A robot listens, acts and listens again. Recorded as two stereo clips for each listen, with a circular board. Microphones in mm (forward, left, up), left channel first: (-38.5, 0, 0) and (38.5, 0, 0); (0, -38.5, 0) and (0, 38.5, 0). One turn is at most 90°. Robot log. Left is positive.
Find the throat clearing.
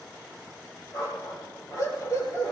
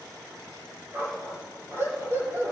cmd idle
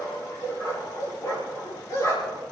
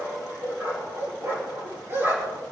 cmd idle
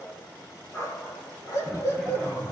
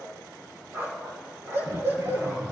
note: The throat clearing: 105° left.
cmd yaw +90
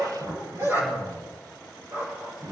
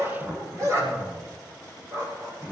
note: The throat clearing is now 15° left.
cmd yaw +15
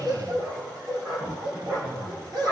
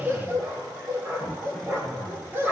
end: Found it: throat clearing, straight ahead.